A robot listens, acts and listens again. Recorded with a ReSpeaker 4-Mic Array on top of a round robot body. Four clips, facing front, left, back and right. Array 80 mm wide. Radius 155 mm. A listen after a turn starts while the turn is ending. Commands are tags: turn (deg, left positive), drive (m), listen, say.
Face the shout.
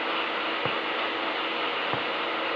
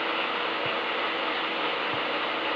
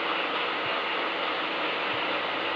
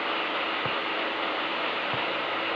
<listen/>
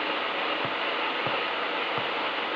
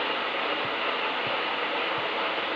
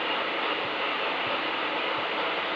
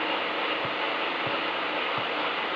<listen/>
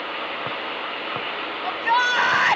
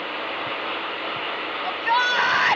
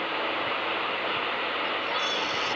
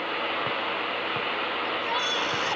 <turn deg="30"/>
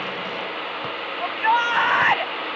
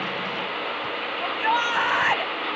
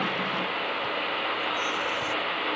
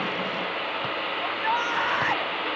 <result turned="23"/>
<turn deg="10"/>
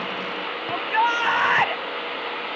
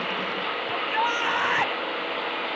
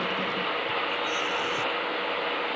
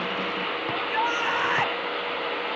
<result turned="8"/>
<say>Found it: a shout, straight ahead.</say>